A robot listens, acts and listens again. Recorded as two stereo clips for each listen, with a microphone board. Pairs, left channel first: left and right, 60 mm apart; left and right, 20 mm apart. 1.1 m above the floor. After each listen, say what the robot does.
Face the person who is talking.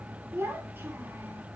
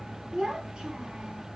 Turn 35° right.
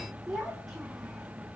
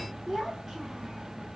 Facing the child speaking, 2 to 4 m away.